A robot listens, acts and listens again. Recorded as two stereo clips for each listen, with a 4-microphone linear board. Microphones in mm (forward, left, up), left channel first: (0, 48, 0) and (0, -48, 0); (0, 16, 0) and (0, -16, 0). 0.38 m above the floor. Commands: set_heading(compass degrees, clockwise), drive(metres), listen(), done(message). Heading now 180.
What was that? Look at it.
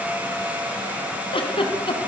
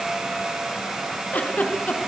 set_heading(120)
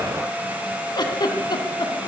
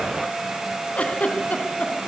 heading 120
set_heading(70)
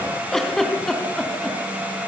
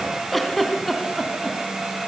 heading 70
done("Facing the giggle, 2 to 4 m away.")